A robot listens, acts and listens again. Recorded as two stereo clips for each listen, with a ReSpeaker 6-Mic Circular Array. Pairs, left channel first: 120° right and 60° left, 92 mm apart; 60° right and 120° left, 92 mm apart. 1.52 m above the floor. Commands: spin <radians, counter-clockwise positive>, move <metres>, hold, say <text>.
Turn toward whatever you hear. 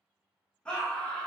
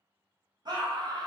spin 2.79
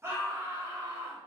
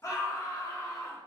say Found it: a scream, straight ahead.